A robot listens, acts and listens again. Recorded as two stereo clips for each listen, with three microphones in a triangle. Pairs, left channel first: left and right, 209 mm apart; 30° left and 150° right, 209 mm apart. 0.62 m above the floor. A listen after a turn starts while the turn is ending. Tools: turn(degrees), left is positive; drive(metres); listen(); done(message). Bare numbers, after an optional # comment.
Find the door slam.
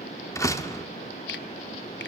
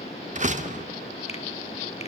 # The door slam: 165° left.
turn(165)
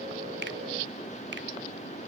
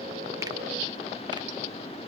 done("I heard a door slam from this way, but can't make it out now.")